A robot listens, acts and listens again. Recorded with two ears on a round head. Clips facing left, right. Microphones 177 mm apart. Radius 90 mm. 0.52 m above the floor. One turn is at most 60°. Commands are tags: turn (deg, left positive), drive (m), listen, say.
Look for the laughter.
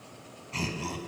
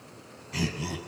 <turn deg="-30"/>
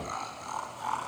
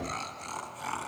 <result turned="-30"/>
<turn deg="-60"/>
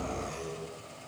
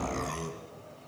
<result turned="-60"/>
<turn deg="-60"/>
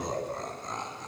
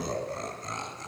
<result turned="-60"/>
<turn deg="-35"/>
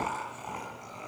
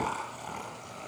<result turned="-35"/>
<turn deg="-10"/>
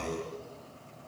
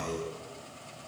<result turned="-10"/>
<say>Facing the laughter.</say>